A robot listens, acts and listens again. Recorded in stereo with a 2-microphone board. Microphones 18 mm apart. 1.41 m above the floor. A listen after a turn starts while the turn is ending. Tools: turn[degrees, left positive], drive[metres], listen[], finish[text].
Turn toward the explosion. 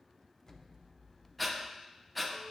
Thought: The explosion: about 35° left or 145° left.
Action: turn[35]
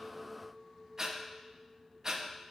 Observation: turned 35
Action: listen[]
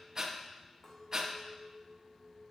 Action: finish[I heard an explosion, but can't make it out now. It was about straight ahead or 110° left.]